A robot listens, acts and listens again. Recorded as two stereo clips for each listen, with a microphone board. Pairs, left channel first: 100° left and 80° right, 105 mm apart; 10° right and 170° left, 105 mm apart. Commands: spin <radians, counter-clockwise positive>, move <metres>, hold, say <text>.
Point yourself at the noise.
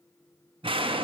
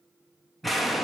spin -1.75
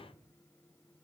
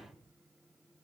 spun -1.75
say Facing where the explosion came from. I can't hear it now.